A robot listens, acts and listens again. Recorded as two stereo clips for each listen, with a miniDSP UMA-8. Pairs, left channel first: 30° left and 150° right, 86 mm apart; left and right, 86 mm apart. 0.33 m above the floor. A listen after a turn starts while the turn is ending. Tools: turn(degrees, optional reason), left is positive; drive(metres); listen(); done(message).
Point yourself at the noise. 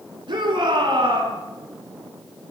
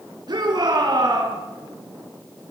turn(degrees=-130, reason="The shout: 130° right.")
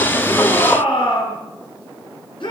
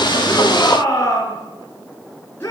turn(degrees=25, reason="The shout is now 25° left.")
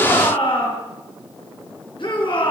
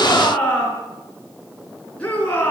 turn(degrees=15, reason="The shout is now 15° left.")
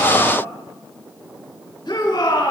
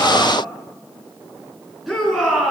done("Facing the shout.")